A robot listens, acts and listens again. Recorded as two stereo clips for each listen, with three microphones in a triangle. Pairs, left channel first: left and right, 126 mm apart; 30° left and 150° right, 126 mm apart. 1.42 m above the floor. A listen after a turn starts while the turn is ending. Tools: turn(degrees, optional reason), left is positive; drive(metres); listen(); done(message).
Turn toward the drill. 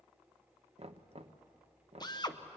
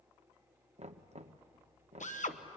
turn(degrees=35, reason="The drill: 35° left.")
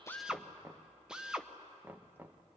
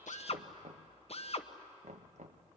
done("Facing the drill, 1 to 2 m away.")